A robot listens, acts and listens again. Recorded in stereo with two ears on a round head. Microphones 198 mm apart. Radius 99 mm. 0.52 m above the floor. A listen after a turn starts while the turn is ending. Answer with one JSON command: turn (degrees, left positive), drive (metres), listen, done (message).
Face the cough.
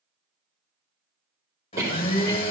{"turn": -30}
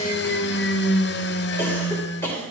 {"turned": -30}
{"turn": 15}
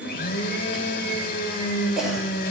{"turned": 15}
{"done": "Facing the cough."}